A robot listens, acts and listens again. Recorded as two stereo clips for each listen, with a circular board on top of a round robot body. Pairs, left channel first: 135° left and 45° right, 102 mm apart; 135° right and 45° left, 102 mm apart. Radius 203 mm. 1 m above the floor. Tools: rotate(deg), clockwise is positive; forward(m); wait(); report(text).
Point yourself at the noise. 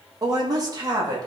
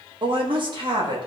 report("Found it: a woman speaking, straight ahead, 2 to 4 m away.")